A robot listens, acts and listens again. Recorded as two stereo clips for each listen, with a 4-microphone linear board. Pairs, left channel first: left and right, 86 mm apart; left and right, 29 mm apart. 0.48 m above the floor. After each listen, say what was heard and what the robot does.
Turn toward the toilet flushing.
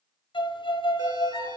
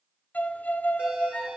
Keep listening.
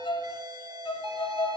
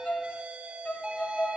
Keep listening.
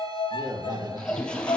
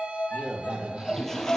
Turn 30° left.
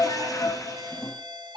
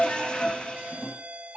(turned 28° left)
So it is at 140° left. Turn 140° left.
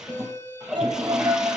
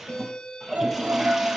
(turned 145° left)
Facing the toilet flushing, 2 to 4 m away.